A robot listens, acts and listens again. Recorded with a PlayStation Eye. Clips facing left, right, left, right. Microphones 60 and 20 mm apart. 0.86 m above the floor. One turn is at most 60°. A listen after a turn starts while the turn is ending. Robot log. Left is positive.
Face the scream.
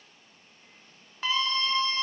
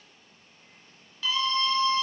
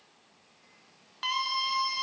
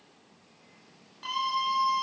note: The scream: about 40° left or 140° left.
cmd yaw +40
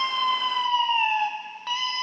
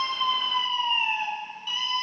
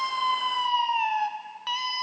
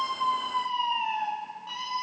note: So it is at 100° left.
cmd yaw +60
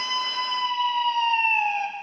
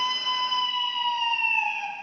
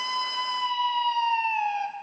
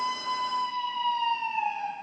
note: The scream is now 60° left.
cmd yaw +60
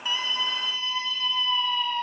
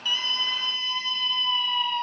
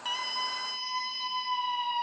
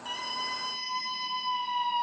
end: Found it: a scream, straight ahead.